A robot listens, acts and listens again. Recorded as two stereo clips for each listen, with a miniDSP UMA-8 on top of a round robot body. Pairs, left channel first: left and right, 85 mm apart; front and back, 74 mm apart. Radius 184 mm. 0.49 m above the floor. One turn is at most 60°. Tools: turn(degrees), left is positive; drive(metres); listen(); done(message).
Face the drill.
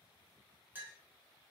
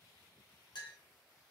listen()
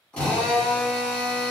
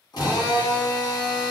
turn(degrees=15)
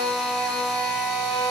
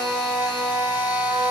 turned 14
done("Facing the drill.")